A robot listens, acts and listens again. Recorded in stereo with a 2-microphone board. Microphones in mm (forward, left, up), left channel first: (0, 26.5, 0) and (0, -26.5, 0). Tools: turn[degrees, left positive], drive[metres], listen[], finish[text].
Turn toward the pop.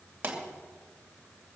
Thought: The pop: about 40° right or 140° right.
Action: turn[-40]
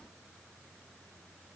Action: listen[]
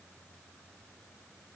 Action: finish[I heard a pop, but can't make it out now. It was about straight ahead or 100° right.]